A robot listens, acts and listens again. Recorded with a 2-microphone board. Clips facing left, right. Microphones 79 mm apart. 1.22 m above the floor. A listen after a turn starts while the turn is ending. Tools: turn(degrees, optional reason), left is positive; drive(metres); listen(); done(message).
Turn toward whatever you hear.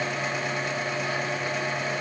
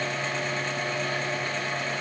listen()
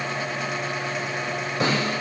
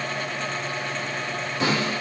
turn(degrees=30, reason="The snare drum: about 30° left or 150° left.")
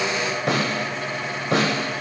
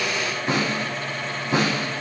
turn(degrees=115, reason="So it is at 115° left.")
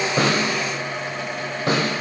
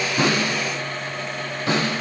turn(degrees=40, reason="The snare drum is now 40° left.")
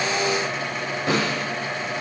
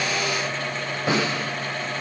done("Found it: a snare drum, straight ahead.")